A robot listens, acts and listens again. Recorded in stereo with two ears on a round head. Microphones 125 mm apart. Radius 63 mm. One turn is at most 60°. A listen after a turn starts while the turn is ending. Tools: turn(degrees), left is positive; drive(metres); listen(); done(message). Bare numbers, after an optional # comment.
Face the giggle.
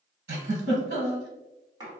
turn(-60)
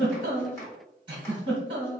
# So it is at 40° right.
turn(-40)
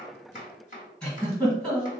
done("Found it: a giggle, straight ahead.")